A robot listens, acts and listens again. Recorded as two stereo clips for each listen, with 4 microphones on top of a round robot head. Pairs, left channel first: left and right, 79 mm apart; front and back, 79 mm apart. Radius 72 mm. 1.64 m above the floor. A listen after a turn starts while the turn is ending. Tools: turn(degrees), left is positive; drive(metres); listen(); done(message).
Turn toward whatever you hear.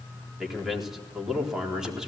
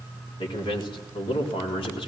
turn(degrees=-10)
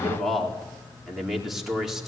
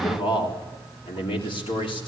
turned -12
done("Facing the man speaking.")